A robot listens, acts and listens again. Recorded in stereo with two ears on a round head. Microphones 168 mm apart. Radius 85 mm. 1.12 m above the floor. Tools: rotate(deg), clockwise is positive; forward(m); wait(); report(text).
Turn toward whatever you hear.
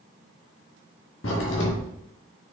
rotate(-90)
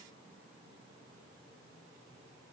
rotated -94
report("Facing where the crack came from. I can't hear it now.")